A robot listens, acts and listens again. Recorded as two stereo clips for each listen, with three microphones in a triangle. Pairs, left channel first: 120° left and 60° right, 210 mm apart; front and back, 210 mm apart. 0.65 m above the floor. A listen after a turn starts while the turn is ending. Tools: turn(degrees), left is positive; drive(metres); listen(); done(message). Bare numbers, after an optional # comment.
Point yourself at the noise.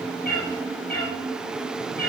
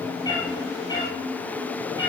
# The cat meowing: 70° left.
turn(70)
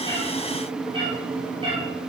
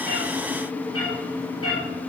done("Facing the cat meowing, over 4 m away.")